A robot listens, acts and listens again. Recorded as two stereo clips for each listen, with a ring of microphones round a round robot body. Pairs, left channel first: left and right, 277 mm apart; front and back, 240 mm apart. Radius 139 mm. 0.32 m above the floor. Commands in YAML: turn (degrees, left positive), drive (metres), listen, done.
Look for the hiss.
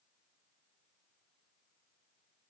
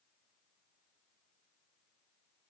listen: true
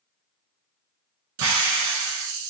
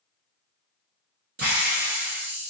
turn: -120
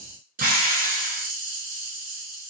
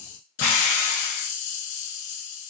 turn: -30
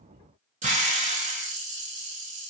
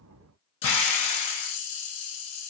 turn: -25
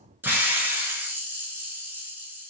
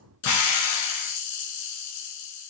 done: "Found it: a hiss, straight ahead."